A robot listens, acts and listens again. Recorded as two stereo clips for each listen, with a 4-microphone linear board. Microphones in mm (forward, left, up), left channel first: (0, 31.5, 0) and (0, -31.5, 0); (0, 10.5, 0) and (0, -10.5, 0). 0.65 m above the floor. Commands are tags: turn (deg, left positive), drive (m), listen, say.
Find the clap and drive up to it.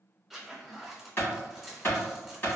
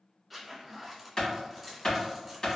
<turn deg="40"/>
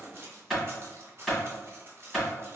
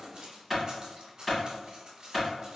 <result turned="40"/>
<drive m="1.0"/>
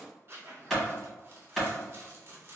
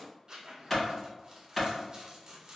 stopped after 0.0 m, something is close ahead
<say>Something is in my way. I am facing the clap but have not reached it.</say>